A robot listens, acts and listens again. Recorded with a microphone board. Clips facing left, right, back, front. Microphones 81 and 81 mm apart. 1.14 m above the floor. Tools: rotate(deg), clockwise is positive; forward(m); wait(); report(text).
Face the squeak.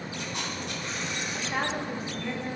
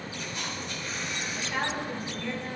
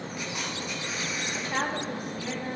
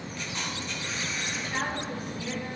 wait()
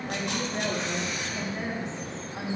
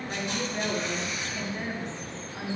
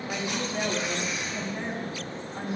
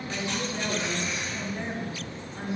wait()
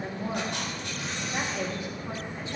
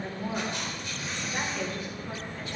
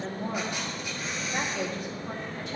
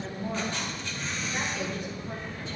report("I can't make out a squeak, only a woman speaking and a camera shutter.")